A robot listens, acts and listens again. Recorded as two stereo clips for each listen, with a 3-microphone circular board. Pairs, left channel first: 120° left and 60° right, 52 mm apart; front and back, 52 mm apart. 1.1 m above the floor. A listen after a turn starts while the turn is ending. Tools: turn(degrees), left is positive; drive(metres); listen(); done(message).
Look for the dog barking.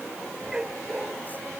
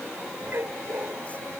turn(degrees=-140)
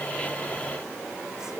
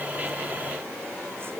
listen()
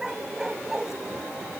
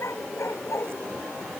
turn(degrees=20)
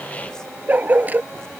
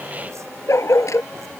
done("Found it: a dog barking, straight ahead.")